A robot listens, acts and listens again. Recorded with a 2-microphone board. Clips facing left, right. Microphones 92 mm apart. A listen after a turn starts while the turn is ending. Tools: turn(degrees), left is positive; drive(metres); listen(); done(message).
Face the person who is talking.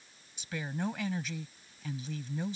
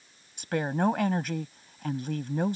turn(degrees=-60)
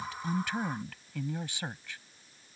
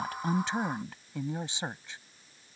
turn(degrees=-25)
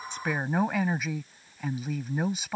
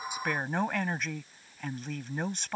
turn(degrees=10)
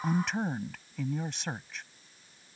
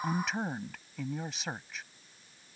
done("Facing the woman speaking.")